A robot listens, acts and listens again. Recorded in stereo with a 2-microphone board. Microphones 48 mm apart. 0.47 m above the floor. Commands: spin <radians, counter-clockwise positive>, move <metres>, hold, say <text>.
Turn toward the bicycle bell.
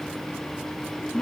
hold
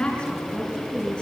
hold
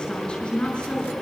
say I can't make out a bicycle bell, only a woman speaking.